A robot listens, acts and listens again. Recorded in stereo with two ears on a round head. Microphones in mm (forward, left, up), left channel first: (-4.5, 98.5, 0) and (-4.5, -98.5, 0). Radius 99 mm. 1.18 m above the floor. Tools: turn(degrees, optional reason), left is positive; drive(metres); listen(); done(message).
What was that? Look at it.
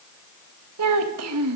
turn(degrees=-90)
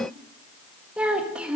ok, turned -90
done("Found it: a child speaking, straight ahead, 1 to 2 m away.")